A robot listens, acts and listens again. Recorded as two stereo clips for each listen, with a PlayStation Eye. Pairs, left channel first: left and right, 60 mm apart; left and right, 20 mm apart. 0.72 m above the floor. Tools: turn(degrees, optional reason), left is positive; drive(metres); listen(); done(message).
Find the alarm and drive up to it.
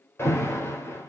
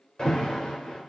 turn(degrees=45, reason="The alarm: about 45° left or 135° left.")
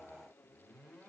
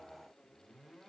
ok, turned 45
listen()
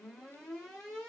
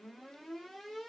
drive(metres=1.0)
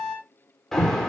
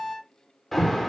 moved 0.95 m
drive(metres=1.0)
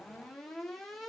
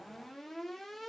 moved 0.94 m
drive(metres=1.0)
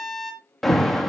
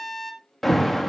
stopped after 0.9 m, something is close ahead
done("I am next to the alarm.")